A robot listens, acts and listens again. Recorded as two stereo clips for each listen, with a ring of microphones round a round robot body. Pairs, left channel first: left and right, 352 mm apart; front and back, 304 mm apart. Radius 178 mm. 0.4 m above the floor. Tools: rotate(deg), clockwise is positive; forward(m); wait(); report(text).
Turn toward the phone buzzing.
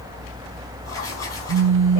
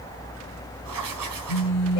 rotate(35)
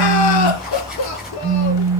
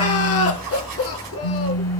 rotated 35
rotate(20)
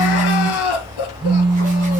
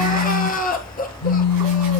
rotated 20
report("Facing the phone buzzing.")